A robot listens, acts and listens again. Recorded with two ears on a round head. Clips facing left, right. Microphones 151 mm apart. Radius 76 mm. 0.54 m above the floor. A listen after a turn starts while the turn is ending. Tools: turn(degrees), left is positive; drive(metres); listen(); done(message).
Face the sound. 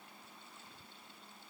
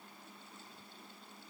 listen()
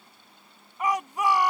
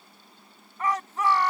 turn(degrees=30)
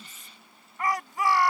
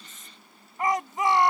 turn(degrees=-20)
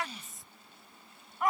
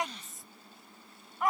done("Found it: a shout, straight ahead.")